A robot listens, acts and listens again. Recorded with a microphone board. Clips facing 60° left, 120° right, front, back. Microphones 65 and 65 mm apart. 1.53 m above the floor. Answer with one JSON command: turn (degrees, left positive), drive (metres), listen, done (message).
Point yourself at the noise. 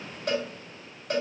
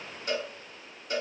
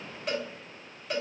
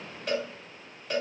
{"turn": 90}
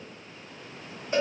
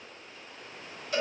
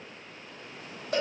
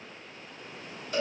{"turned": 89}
{"done": "Facing the cowbell, 1 to 2 m away."}